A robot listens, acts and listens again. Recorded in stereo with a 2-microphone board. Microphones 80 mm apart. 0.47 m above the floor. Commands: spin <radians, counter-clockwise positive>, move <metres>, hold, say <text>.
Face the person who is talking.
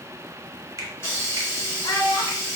spin 1.05
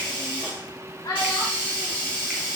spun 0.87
spin 0.87
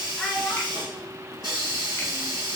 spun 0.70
spin 0.17
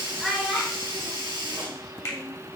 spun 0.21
say Facing the child speaking.